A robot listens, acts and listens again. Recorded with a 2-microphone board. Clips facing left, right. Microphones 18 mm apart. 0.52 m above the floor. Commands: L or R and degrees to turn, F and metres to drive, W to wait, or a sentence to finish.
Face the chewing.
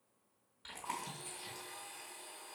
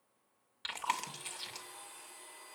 R60
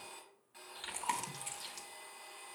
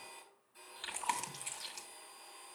R10
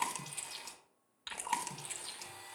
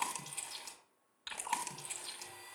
Facing the chewing.